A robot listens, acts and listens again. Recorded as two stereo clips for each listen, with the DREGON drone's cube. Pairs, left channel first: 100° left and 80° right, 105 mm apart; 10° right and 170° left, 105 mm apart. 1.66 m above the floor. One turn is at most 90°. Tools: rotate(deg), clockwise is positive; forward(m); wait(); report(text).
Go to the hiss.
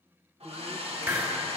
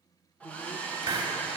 rotate(90)
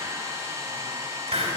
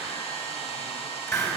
rotate(70)
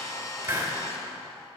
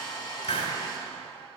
rotate(15)
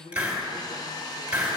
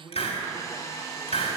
forward(1.0)
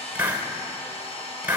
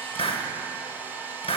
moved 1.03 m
forward(1.0)
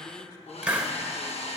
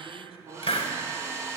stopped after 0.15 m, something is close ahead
report("I am next to the hiss.")